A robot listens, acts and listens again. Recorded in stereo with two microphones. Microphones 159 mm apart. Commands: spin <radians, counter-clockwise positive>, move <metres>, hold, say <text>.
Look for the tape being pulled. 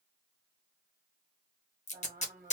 spin 0.87
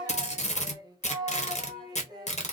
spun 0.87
spin 1.13
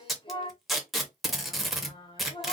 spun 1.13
say Facing the tape being pulled.